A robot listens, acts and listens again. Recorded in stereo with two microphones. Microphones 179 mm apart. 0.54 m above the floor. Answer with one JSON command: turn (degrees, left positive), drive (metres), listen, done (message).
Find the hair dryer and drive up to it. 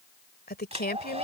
{"turn": -40}
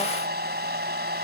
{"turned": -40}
{"turn": -100}
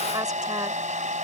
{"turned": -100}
{"turn": -45}
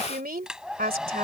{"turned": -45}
{"drive": 1.0}
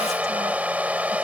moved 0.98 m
{"turn": -10}
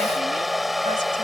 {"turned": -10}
{"drive": 1.0}
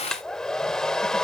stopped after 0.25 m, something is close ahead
{"done": "I am next to the hair dryer."}